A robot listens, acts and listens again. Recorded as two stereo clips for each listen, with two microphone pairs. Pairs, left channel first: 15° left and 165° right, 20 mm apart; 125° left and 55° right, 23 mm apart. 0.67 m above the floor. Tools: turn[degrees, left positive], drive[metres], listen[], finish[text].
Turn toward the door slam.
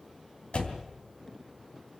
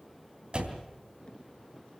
Action: finish[Facing the door slam.]